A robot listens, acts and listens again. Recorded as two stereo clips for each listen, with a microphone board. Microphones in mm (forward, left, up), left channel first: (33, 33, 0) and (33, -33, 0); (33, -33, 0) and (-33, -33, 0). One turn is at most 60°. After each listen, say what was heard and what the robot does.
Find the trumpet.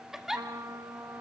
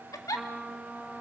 The trumpet: 110° right. Turn 60° right.
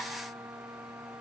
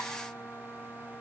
The trumpet is now 60° right. Turn 60° right.
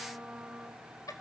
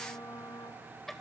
The trumpet is now 15° right. Turn 15° right.
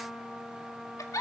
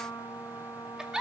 Facing the trumpet.